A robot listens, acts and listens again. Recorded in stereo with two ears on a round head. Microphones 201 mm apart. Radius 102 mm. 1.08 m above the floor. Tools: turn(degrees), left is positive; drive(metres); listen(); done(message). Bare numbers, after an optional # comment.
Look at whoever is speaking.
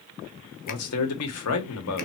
turn(90)
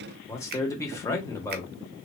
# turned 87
# So it is at 15° left.
turn(15)
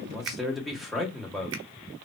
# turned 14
done("Facing the man speaking, 1 to 2 m away.")